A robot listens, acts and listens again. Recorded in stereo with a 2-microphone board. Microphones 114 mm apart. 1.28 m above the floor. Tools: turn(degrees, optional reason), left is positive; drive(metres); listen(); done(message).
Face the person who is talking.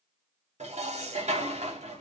listen()
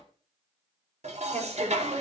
turn(degrees=-90)
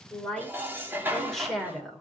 done("Found it: a woman speaking, straight ahead.")